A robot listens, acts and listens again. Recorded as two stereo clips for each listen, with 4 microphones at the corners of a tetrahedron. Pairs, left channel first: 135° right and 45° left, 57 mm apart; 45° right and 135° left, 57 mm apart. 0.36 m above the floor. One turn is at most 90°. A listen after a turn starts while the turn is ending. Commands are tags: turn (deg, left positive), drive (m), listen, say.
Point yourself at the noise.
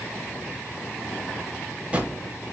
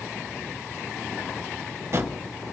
<turn deg="90"/>
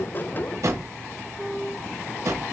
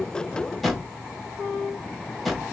<turn deg="40"/>
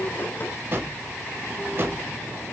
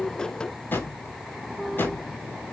<say>Facing the drawer.</say>